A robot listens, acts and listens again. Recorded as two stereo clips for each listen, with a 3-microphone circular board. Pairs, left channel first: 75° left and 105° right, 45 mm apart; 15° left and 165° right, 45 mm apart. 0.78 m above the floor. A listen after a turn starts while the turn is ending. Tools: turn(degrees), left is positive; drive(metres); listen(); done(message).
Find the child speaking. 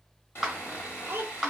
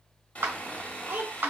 turn(degrees=-130)
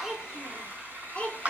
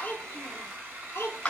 turn(degrees=10)
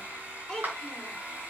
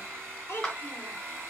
done("Facing the child speaking, 1 to 2 m away.")